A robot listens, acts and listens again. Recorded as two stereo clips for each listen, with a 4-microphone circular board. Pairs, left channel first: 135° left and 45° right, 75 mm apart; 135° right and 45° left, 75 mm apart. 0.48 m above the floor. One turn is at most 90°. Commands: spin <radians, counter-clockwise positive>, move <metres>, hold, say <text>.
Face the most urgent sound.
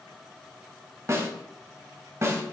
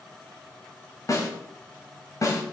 hold
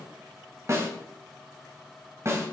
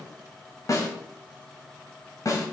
hold
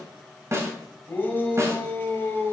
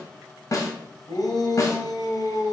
spin -1.57
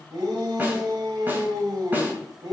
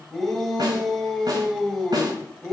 spin -0.87
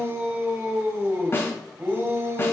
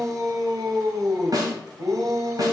spin 0.17
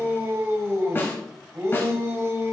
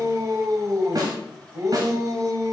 say Found it: a shout, straight ahead.